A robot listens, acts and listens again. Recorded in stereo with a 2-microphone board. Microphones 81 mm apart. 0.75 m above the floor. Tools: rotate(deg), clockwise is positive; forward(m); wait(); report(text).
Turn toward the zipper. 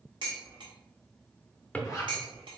rotate(-40)
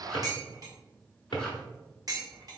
wait()
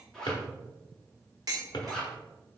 report("Found it: a zipper, straight ahead.")